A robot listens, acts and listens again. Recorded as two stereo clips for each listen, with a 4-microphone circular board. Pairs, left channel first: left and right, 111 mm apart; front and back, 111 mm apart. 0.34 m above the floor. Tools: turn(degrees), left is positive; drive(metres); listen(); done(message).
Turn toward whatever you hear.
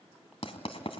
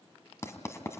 turn(degrees=65)
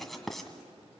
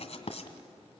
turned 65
done("Facing the writing.")